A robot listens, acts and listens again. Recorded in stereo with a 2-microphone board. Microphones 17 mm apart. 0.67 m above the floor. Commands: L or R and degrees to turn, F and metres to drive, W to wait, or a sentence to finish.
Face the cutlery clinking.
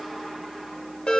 W
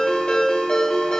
W
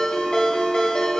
I can't make out cutlery clinking to turn to.